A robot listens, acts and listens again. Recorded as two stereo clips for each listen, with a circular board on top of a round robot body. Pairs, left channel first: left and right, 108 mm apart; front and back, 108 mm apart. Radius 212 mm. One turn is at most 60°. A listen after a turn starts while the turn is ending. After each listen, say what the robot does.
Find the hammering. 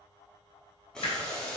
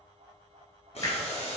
Turn 50° left.
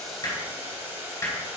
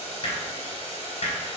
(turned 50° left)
Turn 20° left.
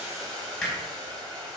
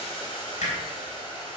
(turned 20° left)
Facing the hammering.